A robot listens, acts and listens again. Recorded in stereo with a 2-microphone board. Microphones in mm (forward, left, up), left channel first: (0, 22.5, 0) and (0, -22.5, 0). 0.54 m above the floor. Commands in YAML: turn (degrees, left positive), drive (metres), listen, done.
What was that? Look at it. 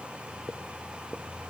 listen: true
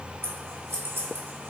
turn: -65
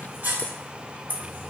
turn: -45
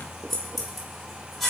done: "Found it: scissors, straight ahead, 1 to 2 m away."